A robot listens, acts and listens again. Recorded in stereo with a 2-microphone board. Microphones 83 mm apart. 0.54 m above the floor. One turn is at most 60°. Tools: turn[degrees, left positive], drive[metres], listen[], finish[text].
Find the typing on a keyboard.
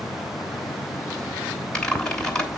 Action: turn[30]
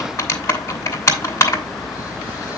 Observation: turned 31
Thought: So it is at 140° left.
Action: turn[60]
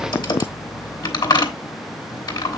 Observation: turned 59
Thought: The typing on a keyboard is now 80° left.
Action: turn[60]
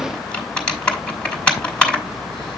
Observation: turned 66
Thought: The typing on a keyboard is now 15° left.
Action: turn[15]
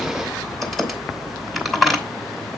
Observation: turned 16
Action: finish[Facing the typing on a keyboard.]